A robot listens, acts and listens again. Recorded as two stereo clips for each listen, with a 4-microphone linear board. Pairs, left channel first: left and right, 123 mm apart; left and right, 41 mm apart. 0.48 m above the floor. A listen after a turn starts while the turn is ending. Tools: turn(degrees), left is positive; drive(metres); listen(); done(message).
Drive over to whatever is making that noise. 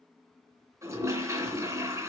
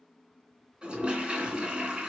turn(degrees=-25)
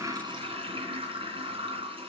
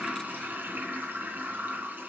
turn(degrees=-130)
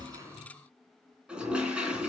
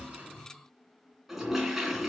turn(degrees=-10)
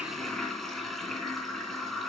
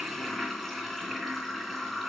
drive(metres=1.0)
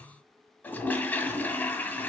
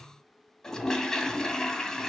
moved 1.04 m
turn(degrees=15)
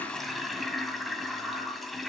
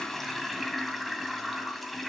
drive(metres=1.0)
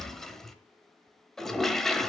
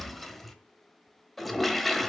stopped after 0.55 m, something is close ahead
done("I am next to the toilet flushing.")